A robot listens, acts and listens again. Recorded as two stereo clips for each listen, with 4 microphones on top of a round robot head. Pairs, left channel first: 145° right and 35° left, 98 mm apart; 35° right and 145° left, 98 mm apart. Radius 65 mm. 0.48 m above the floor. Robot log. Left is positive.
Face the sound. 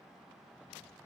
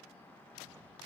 cmd idle
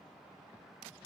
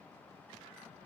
cmd idle
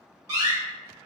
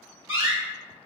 note: The door slam: 85° left.
cmd yaw +85
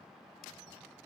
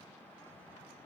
end: Facing where the door slam came from. I can't hear it now.